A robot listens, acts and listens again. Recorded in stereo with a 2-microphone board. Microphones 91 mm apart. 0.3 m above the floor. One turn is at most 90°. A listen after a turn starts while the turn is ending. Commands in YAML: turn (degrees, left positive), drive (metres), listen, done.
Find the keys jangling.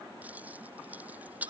turn: -15
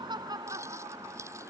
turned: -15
listen: true
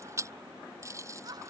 turn: -35
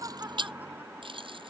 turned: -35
turn: -90
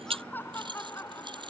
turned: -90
turn: -60
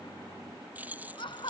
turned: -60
turn: -20
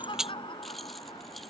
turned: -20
done: "Facing the keys jangling."